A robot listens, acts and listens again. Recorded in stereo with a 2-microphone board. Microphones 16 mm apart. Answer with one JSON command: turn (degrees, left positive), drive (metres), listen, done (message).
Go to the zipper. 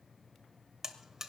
{"listen": true}
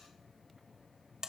{"listen": true}
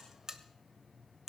{"done": "I can't make out a zipper to turn to."}